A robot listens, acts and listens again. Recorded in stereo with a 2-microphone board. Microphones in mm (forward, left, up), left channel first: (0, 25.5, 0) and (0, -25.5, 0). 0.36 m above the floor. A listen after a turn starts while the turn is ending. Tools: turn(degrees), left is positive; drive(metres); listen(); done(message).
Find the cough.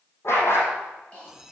turn(degrees=25)
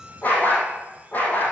listen()
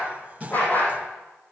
listen()
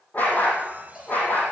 done("I heard a cough, but can't make it out now. It was about straight ahead or 130° left.")